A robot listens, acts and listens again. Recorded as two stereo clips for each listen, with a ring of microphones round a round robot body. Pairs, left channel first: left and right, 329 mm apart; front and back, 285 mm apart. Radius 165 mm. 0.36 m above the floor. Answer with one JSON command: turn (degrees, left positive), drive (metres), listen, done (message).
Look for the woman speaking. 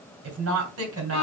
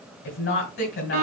{"turn": -50}
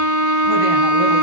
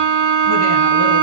{"listen": true}
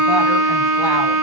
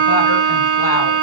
{"listen": true}
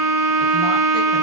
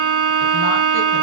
{"done": "I heard a woman speaking from this way, but can't make it out now."}